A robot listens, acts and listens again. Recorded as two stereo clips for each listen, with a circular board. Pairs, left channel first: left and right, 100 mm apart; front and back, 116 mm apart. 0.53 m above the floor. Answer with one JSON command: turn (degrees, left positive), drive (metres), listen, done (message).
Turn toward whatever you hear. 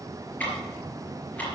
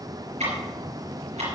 {"turn": 165}
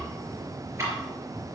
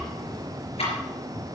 {"turn": -30}
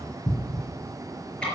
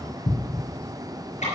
{"turn": 10}
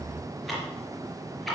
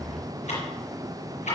{"done": "Facing the ticking, over 4 m away."}